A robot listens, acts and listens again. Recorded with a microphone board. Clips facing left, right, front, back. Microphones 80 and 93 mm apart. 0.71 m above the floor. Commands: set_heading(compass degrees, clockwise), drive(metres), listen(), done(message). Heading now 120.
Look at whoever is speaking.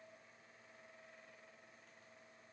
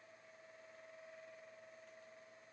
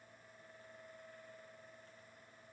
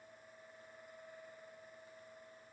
listen()
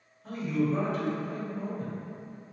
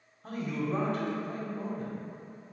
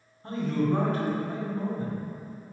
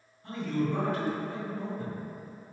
set_heading(170)
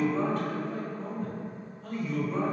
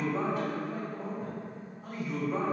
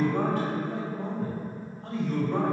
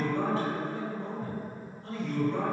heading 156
set_heading(171)
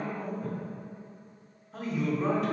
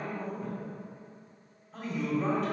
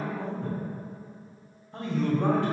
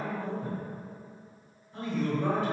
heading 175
done("Facing the man speaking, 1 to 2 m away.")